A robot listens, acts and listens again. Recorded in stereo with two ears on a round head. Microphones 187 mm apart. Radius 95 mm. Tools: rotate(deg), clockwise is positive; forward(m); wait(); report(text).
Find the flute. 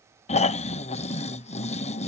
wait()
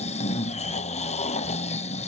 wait()
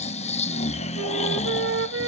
rotate(60)
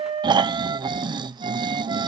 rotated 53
rotate(25)
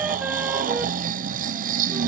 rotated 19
wait()
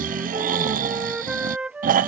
report("Found it: a flute, straight ahead.")